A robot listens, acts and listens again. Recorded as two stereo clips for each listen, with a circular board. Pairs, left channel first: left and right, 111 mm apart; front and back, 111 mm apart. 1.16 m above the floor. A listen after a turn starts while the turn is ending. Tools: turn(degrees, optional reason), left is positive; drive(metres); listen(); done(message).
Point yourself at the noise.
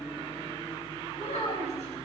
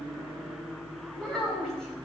turn(degrees=85, reason="The child speaking: 85° left.")
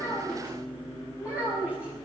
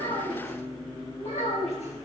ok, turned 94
turn(degrees=-10, reason="The child speaking is now 10° right.")
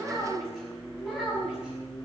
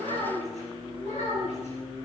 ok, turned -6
done("Found it: a child speaking, straight ahead, over 4 m away.")